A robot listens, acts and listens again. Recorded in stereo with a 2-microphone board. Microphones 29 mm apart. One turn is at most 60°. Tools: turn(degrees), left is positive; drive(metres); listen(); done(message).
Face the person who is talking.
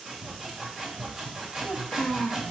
turn(degrees=60)
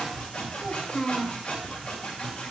turn(degrees=30)
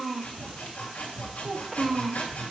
done("Found it: a child speaking, straight ahead, 1 to 2 m away.")